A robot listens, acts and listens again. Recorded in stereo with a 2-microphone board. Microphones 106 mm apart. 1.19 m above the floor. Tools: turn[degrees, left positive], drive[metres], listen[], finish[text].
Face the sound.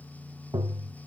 Thought: The tapping: about 40° right or 140° right.
Action: turn[-40]
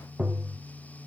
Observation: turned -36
Action: finish[Facing the tapping, under 1 m away.]